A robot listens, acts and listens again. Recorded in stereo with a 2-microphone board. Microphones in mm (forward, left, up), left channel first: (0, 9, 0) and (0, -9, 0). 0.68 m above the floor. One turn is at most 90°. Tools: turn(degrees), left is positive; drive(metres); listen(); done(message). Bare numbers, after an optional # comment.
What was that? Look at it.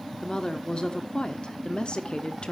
# The woman speaking: about 55° left or 125° left.
turn(55)
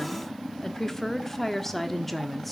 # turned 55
done("Facing the woman speaking, 1 to 2 m away.")